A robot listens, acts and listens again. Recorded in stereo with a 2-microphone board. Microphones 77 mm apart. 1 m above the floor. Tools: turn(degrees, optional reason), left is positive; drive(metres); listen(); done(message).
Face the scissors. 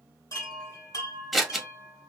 turn(degrees=30)
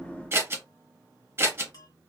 turn(degrees=-35, reason="So it is at 35° right.")
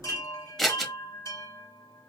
done("Facing the scissors.")